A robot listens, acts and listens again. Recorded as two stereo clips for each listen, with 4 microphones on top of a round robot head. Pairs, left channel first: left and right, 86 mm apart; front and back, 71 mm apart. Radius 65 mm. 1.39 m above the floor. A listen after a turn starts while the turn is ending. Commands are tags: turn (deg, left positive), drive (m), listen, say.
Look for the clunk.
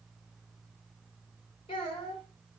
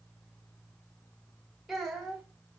<listen/>
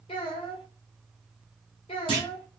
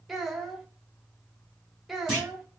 <turn deg="-90"/>
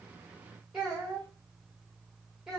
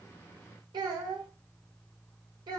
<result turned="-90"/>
<say>Facing where the clunk came from. I can't hear it now.</say>